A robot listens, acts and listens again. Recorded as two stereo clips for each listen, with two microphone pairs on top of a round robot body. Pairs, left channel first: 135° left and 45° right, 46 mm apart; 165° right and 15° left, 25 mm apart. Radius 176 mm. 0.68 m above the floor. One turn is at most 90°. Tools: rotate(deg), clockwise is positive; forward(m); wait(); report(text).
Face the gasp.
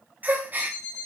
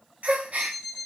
report("Facing the gasp.")